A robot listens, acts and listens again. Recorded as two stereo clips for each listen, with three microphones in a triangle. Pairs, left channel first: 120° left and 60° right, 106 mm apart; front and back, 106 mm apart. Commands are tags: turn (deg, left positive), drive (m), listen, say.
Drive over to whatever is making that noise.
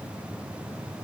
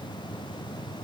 <listen/>
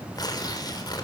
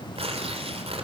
<turn deg="170"/>
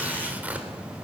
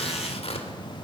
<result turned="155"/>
<turn deg="15"/>
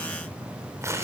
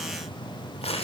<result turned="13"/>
<drive m="1.0"/>
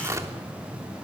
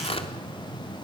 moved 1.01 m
<drive m="1.0"/>
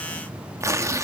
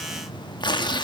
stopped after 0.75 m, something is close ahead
<turn deg="-10"/>
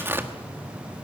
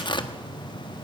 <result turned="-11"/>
<say>Arrived at the tearing paper, straight ahead.</say>